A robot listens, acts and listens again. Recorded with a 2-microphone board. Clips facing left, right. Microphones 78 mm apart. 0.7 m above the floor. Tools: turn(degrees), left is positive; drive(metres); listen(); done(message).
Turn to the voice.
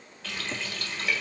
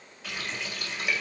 listen()
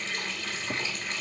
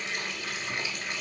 listen()
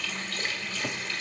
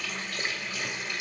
done("I can't make out anyone speaking to turn to.")